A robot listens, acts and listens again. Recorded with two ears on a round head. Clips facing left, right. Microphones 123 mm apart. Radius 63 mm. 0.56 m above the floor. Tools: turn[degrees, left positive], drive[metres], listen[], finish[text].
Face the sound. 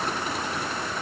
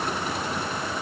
Action: listen[]
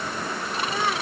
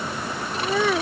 Thought: The child speaking: about 60° right or 120° right.
Action: turn[-60]
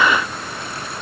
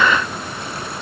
Action: listen[]
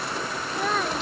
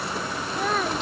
Action: finish[Facing the child speaking.]